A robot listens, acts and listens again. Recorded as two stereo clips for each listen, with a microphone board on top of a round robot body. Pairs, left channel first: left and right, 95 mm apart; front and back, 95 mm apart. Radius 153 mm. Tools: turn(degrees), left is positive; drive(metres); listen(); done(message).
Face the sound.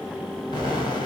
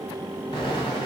turn(degrees=45)
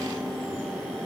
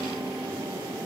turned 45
done("Facing where the explosion came from. I can't hear it now.")